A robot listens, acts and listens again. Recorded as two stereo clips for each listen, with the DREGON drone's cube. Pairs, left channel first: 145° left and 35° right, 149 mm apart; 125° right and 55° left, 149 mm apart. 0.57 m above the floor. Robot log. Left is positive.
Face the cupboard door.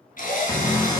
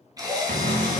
note: The cupboard door: 85° left.
cmd yaw +85
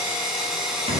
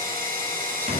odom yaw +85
cmd idle
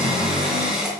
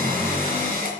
note: The cupboard door is now 15° left.
cmd yaw +15
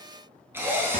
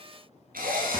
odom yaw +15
cmd idle
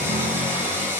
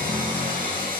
end: Found it: a cupboard door, straight ahead.